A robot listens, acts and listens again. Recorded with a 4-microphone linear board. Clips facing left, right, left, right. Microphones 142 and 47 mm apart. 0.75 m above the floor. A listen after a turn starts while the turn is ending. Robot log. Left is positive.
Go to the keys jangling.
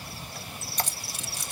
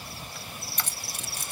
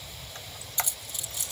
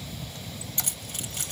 note: The keys jangling: about 55° right or 125° right.
cmd yaw -55
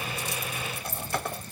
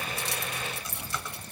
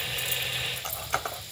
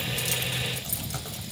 note: So it is at 70° right.
cmd yaw -70
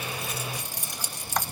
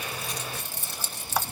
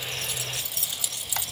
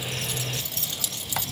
note: The keys jangling is now 15° left.
cmd yaw +15
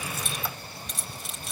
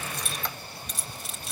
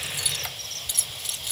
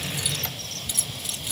cmd fwd 1.0
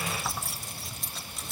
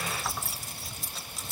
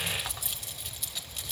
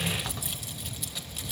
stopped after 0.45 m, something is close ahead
end: Blocked. The keys jangling is further on, straight ahead.